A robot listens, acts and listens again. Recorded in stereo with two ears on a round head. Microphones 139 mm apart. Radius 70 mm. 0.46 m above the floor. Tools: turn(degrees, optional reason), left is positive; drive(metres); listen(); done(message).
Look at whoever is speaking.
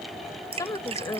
turn(degrees=20, reason="The woman speaking: about 20° left or 160° left.")
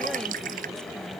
listen()
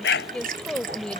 done("Found it: a woman speaking, straight ahead.")